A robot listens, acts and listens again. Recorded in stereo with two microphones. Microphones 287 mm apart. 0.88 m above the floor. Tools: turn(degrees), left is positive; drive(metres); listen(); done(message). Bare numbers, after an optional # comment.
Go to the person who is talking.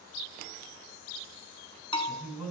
turn(90)
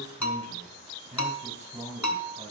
# So it is at 10° right.
turn(-10)
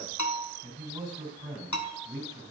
drive(1.0)
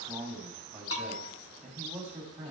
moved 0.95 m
drive(1.0)
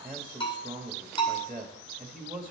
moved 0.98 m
drive(1.0)
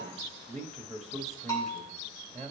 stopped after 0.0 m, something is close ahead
done("I am next to the man speaking.")